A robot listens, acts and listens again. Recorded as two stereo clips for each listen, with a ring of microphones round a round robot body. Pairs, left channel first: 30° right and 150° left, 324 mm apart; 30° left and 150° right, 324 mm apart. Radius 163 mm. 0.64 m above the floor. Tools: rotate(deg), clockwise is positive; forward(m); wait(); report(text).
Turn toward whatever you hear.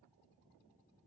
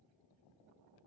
wait()
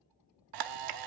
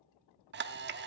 rotate(-155)
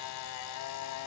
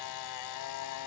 report("Found it: a camera shutter, straight ahead.")